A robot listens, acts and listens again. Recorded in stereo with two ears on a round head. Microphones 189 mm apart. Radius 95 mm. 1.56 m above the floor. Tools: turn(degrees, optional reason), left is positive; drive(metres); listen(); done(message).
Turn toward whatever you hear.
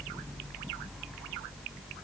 listen()
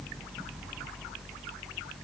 listen()
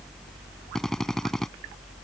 turn(degrees=30)
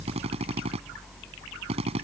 turn(degrees=-30, reason="So it is at 30° right.")
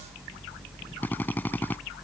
turn(degrees=10, reason="The drill is now 10° left.")
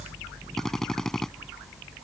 done("Found it: a drill, straight ahead.")